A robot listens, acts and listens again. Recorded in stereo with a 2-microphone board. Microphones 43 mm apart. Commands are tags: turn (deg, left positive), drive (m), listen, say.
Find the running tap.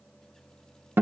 <listen/>
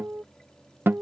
<listen/>
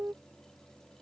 <say>I can't make out a running tap, only a guitar.</say>